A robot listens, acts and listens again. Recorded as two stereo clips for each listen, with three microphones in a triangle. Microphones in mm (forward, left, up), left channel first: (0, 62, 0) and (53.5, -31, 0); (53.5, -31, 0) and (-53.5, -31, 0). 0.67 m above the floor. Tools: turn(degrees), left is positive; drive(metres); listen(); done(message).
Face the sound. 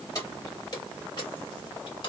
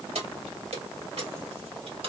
turn(degrees=155)
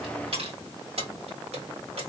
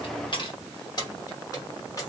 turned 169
turn(degrees=-60)
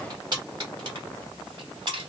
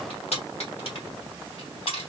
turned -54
turn(degrees=-25)
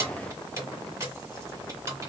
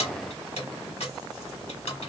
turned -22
done("Found it: keys jangling, straight ahead.")